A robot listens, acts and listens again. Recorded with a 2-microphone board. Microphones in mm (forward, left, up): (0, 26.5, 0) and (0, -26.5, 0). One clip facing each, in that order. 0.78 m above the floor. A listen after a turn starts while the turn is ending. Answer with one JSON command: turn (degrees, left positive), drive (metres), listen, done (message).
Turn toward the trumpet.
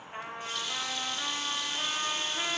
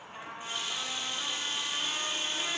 {"turn": 35}
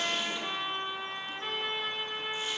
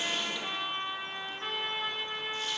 {"done": "Found it: a trumpet, straight ahead, under 1 m away."}